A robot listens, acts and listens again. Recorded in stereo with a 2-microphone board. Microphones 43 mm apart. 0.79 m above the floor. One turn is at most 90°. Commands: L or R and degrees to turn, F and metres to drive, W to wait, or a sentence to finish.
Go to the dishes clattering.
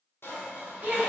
L65
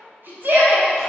W
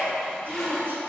W
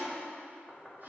I heard dishes clattering, but can't make it out now. It was about straight ahead or 50° left. I did not reach it.